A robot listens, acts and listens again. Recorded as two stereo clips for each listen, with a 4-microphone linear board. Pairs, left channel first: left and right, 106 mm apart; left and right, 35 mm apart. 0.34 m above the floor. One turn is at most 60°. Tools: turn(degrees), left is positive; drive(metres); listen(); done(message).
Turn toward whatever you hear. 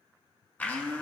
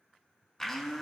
turn(degrees=15)
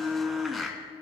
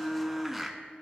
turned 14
done("Found it: a blender, straight ahead.")